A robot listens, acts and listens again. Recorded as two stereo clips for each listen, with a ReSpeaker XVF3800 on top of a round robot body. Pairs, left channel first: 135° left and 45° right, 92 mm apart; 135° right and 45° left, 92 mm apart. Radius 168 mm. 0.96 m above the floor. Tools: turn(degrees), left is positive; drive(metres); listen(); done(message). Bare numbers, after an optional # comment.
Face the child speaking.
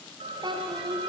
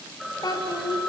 # The child speaking: 85° right.
turn(-85)
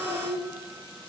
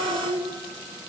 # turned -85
done("Facing the child speaking, 2 to 4 m away.")